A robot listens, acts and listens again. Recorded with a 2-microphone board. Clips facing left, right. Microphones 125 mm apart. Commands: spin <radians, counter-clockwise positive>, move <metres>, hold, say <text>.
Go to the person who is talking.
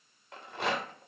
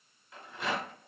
hold
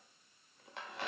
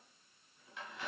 hold
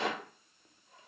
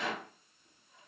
say I can't make out anyone speaking to turn to.